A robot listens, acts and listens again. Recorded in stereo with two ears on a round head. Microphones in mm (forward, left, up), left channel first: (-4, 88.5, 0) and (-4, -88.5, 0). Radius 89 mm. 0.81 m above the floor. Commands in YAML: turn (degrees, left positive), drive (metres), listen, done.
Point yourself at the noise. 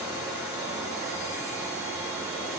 listen: true
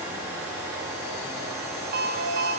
turn: -50
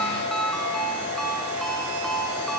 done: "Found it: a ringtone, straight ahead."